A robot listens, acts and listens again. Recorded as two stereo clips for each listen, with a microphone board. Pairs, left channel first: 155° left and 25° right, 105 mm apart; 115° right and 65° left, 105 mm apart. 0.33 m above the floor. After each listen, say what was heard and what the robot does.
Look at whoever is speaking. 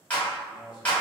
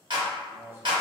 The man speaking: 125° left. Turn 125° left.
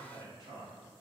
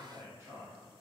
The man speaking is now 10° left. Turn 10° left.
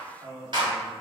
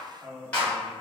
Found it: a man speaking, straight ahead, 1 to 2 m away.